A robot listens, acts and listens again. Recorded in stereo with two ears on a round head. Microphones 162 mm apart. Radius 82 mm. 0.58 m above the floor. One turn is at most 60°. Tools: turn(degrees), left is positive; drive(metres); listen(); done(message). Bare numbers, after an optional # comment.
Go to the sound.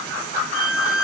# The violin: about 50° right or 130° right.
turn(-50)
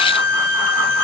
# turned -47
# So it is at 80° right.
turn(-60)
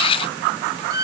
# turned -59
# The violin is now 20° right.
turn(-20)
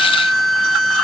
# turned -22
drive(1.0)
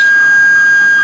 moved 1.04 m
drive(1.0)
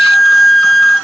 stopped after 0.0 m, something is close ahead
done("I am next to the violin.")